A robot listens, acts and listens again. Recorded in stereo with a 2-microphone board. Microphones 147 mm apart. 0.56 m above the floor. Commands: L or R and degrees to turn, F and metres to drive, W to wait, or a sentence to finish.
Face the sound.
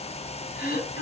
L65
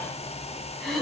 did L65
Found it: throat clearing, straight ahead, 1 to 2 m away.